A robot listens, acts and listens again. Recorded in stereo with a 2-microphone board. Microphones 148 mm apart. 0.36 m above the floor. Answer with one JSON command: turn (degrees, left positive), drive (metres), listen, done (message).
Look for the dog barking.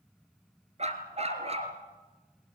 {"turn": -40}
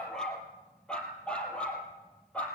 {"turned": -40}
{"turn": 10}
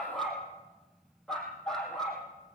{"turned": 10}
{"done": "Found it: a dog barking, straight ahead, over 4 m away."}